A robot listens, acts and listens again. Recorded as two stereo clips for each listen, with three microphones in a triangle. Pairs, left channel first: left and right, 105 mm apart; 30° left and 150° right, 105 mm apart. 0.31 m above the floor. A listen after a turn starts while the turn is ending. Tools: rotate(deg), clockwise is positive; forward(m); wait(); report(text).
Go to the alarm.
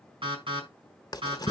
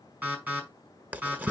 rotate(80)
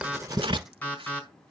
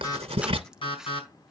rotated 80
rotate(-15)
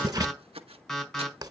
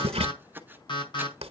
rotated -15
forward(1.0)
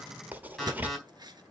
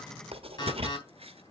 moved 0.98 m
forward(1.0)
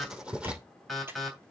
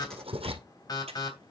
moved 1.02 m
forward(1.0)
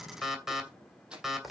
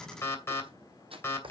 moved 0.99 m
rotate(10)
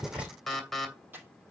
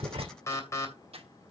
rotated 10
forward(1.0)
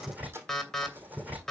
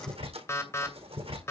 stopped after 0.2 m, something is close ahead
rotate(-10)
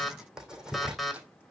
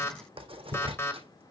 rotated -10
report("I am next to the alarm.")